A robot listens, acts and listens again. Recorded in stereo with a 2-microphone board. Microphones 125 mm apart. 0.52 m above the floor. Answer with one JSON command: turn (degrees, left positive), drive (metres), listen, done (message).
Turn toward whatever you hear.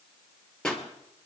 {"turn": 30}
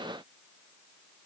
{"listen": true}
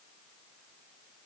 {"done": "I heard a pop, but can't make it out now. It was about 25° right or 145° left."}